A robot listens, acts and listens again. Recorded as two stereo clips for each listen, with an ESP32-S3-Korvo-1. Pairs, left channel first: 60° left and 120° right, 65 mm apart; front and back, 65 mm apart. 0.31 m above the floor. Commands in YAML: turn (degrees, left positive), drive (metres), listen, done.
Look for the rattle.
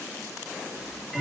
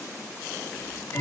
listen: true
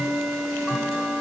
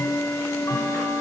listen: true
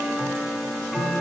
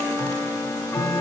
done: "I can't make out a rattle to turn to."